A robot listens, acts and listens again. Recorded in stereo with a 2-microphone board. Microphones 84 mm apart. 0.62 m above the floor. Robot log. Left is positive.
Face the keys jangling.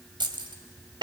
note: The keys jangling: about 65° right or 115° right.
cmd yaw -65
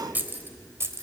note: So it is at 35° right.
cmd yaw -35
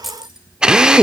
end: Found it: keys jangling, straight ahead, 1 to 2 m away.